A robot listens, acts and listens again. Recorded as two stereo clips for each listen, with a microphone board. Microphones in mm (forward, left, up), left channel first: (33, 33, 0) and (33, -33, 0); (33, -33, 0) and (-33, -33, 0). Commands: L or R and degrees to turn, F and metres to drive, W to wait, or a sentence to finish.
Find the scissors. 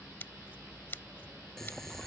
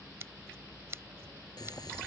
L140
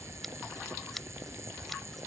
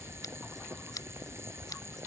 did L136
Found it: scissors, straight ahead.